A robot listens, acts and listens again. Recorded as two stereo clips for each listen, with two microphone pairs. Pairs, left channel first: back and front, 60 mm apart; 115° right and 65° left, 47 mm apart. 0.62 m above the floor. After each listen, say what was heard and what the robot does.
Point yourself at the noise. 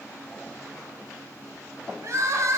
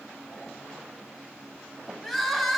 The crying: 30° right. Turn 30° right.
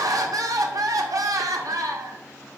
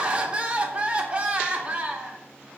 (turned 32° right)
Found it: crying, straight ahead.